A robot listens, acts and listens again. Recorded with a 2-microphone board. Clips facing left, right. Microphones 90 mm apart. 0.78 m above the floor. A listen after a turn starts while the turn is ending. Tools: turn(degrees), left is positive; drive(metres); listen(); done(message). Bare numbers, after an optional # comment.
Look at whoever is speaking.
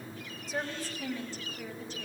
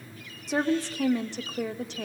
# The woman speaking: about 70° right or 110° right.
turn(-70)
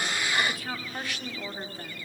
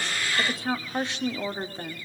# So it is at 30° right.
turn(-30)
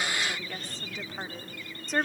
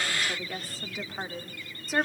done("Found it: a woman speaking, straight ahead.")